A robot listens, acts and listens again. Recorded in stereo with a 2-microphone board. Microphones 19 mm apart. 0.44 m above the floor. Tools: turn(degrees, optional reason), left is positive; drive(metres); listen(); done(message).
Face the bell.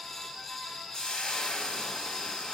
listen()
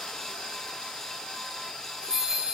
turn(degrees=-40, reason="The bell: about 40° right or 140° right.")
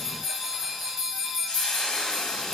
done("Facing the bell, over 4 m away.")